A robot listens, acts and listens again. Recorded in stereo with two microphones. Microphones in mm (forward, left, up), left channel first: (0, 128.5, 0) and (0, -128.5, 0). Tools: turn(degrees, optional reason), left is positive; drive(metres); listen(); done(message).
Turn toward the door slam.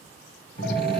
turn(degrees=40, reason="The door slam: about 40° left or 140° left.")
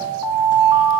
listen()
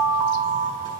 done("I heard a door slam, but can't make it out now. It was about straight ahead or 100° left.")